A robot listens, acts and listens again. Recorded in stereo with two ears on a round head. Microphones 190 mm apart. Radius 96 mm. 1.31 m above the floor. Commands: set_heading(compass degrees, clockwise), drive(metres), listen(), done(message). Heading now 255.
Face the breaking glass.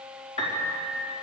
listen()
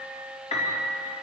listen()
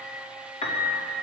done("I can't make out breaking glass to turn to.")